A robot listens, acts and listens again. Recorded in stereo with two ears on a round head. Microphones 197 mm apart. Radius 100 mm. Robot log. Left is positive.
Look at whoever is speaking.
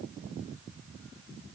cmd idle
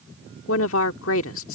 note: The woman speaking: about 65° left or 115° left.
cmd yaw +65
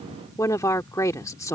note: So it is at 15° left.
cmd yaw +15
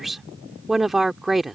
end: Found it: a woman speaking, straight ahead.